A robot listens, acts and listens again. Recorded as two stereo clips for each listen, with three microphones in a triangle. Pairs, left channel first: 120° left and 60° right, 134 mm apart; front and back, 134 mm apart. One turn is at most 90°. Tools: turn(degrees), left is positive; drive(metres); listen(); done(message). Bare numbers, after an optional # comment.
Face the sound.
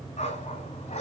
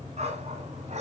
# The dog barking: 150° left.
turn(90)
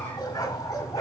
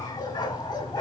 # The dog barking is now 55° left.
turn(55)
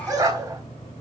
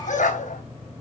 done("Found it: a dog barking, straight ahead, 2 to 4 m away.")